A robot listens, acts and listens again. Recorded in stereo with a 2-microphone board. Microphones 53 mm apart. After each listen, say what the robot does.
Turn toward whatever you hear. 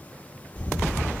Turn 25° left.
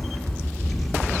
Facing the camera shutter, 1 to 2 m away.